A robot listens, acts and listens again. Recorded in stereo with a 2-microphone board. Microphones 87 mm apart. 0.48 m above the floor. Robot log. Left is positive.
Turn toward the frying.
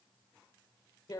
cmd idle
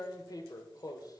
cmd idle
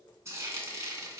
note: The frying: about 35° right or 145° right.
cmd yaw -35
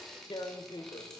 end: Found it: frying, straight ahead, 2 to 4 m away.